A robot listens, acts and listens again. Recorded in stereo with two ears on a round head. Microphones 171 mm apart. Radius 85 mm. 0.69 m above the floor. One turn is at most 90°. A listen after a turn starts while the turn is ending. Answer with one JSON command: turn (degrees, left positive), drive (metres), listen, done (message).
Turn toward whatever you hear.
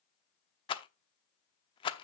{"turn": 25}
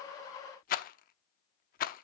{"turn": 90}
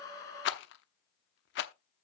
{"turn": 75}
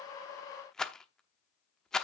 {"done": "Found it: a rattle, straight ahead."}